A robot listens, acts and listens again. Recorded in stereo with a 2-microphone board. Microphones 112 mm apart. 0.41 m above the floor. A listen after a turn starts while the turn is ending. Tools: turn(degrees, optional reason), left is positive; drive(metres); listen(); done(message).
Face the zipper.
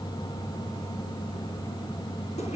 listen()
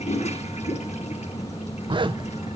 turn(degrees=-45, reason="The zipper: about 45° right or 135° right.")
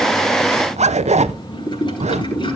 turn(degrees=-90, reason="So it is at 90° right.")
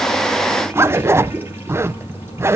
turn(degrees=-25, reason="The zipper is now 25° right.")
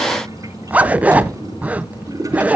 turn(degrees=-15, reason="The zipper is now 15° right.")
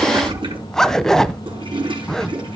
done("Facing the zipper, under 1 m away.")